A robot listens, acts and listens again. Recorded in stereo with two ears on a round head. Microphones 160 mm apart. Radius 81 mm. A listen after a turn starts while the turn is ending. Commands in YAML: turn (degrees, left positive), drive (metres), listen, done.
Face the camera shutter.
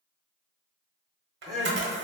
turn: -65
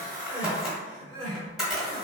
done: "Found it: a camera shutter, straight ahead, under 1 m away."